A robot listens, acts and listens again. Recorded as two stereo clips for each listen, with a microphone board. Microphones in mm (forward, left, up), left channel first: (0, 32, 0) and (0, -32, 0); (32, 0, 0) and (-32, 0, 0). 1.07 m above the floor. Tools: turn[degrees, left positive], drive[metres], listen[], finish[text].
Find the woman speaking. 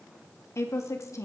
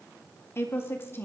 Thought: The woman speaking: 55° left.
Action: turn[55]
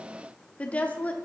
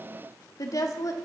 Thought: The woman speaking is now 25° left.
Action: turn[25]
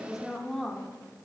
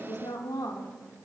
Action: finish[Facing the woman speaking, 2 to 4 m away.]